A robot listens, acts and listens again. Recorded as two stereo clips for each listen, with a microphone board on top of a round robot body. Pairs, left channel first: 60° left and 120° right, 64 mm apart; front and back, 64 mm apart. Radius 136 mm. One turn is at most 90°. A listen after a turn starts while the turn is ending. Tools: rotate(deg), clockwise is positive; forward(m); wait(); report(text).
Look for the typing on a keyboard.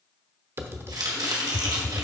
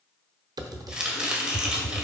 rotate(90)
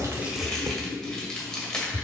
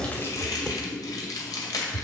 rotate(85)
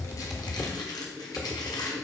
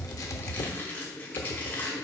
report("Facing the typing on a keyboard.")